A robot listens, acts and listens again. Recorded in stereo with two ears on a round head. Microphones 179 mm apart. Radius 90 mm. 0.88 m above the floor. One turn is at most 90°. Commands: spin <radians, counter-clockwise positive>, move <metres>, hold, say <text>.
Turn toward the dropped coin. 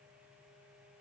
hold
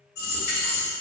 spin 1.05
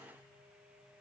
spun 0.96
hold
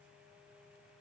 say I heard a dropped coin, but can't make it out now. It was about 5° left or 65° left.